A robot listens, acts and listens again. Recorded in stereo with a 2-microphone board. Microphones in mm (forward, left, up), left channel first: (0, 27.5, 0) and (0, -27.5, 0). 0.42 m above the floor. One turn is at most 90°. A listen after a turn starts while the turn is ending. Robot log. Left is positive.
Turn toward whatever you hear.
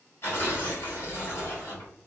note: The tearing paper: about 45° left or 135° left.
cmd yaw +45
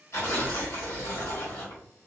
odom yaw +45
note: So it is at 80° left.
cmd yaw +80
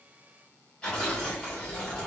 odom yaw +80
note: The tearing paper is now 15° left.
cmd yaw +15
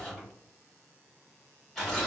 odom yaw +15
note: The tearing paper is now 10° left.
cmd yaw +10
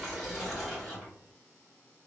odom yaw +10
end: Found it: tearing paper, straight ahead.